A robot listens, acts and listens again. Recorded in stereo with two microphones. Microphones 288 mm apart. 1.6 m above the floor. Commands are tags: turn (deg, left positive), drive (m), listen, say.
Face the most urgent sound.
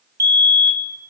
<turn deg="-65"/>
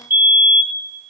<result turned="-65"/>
<say>Facing the fire alarm.</say>